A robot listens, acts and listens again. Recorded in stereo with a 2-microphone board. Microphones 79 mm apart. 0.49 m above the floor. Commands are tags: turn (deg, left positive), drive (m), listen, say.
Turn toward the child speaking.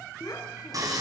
<turn deg="55"/>
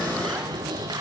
<listen/>
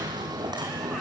<listen/>
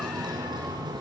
<say>I heard a child speaking, but can't make it out now. It was about straight ahead or 70° left.</say>